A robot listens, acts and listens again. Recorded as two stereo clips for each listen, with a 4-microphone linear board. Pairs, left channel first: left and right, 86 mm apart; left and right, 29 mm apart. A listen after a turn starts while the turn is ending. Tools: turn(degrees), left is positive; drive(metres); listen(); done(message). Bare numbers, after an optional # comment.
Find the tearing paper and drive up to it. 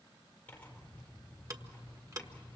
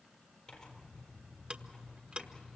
# The tearing paper: about 20° left or 160° left.
turn(20)
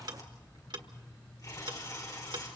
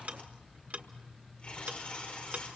# So it is at 135° left.
turn(135)
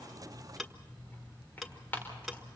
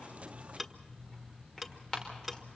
# The tearing paper is now 25° left.
turn(25)
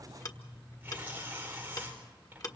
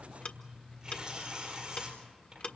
# The tearing paper is now 20° right.
turn(-20)
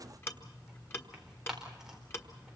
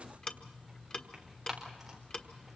drive(1.0)
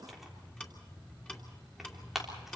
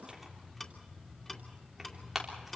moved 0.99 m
drive(1.0)
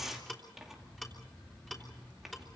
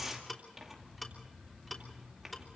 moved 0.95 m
drive(1.0)
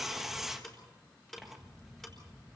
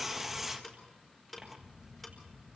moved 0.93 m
drive(1.0)
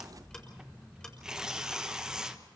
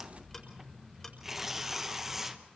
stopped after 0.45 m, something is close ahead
# The tearing paper is now 10° right.
turn(-10)
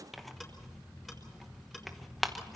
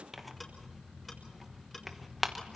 done("I am next to the tearing paper.")